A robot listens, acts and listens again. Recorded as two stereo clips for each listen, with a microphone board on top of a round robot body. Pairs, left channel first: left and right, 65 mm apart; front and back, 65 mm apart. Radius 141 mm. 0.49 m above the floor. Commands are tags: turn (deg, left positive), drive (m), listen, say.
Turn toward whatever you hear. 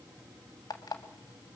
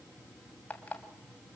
<turn deg="70"/>
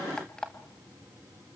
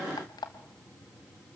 <turn deg="10"/>
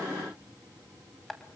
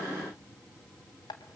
<say>Facing the alarm clock, 2 to 4 m away.</say>